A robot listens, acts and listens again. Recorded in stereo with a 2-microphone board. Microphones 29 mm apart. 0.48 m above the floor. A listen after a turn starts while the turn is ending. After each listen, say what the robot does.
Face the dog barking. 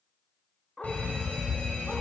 Turn 25° left.
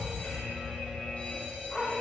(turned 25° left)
Turn 20° left.
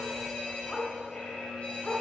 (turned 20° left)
Turn 20° left.
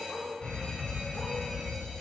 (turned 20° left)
Keep listening.
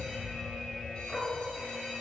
Turn 30° left.
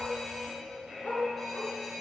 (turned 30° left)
Turn 115° left.
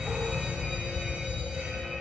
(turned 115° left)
Keep listening.
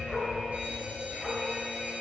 Keep listening.
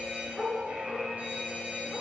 Facing the dog barking, 2 to 4 m away.